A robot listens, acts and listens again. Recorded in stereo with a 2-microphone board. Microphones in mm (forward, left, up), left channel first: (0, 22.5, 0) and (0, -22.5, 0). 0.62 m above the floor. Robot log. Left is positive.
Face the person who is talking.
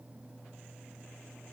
cmd idle
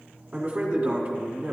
note: The man speaking: about 20° right or 160° right.
cmd yaw -20
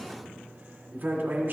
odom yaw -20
note: So it is at 140° right.
cmd yaw -140
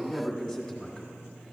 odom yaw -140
end: Facing the man speaking, 1 to 2 m away.